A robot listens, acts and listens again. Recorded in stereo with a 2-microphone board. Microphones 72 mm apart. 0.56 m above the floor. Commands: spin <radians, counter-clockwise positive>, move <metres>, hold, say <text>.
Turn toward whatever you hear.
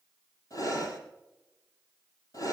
spin 0.87
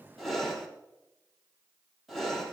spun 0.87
say Facing the breathing, over 4 m away.